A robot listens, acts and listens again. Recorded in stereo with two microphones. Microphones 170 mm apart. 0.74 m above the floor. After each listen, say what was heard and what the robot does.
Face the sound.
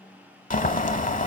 The boiling: about 50° left or 130° left. Turn 50° left.
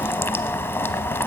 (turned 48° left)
So it is at 15° left. Turn 15° left.
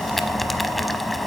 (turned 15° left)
Found it: boiling, straight ahead.